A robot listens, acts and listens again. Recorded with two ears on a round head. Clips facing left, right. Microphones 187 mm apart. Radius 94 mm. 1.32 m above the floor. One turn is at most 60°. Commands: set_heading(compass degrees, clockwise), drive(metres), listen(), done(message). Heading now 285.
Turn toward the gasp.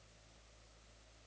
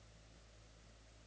listen()
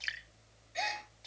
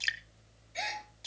set_heading(255)
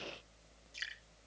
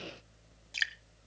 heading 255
listen()
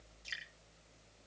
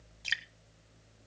done("I heard a gasp, but can't make it out now. It was about 30° right or 150° left.")